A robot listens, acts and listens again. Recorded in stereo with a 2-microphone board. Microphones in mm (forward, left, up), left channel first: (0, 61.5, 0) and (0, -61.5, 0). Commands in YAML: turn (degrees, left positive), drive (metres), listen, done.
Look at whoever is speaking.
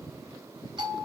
listen: true
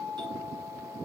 listen: true
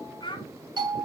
turn: 40
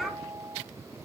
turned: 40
listen: true
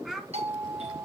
done: "Found it: a child speaking, straight ahead, 1 to 2 m away."